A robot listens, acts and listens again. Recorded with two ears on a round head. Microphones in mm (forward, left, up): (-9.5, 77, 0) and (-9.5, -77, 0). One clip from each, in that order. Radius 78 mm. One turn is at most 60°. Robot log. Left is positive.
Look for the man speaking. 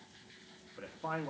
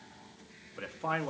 note: The man speaking: about 60° right or 120° right.
cmd yaw -60
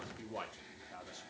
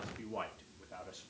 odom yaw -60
note: So it is at 20° left.
cmd yaw +20
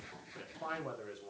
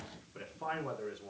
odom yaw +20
end: Found it: a man speaking, straight ahead, 2 to 4 m away.